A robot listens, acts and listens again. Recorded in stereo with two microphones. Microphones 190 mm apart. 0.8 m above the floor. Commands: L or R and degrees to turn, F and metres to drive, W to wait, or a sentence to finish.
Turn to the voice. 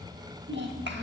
R70
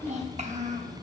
R35
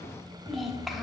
Facing the child speaking, 1 to 2 m away.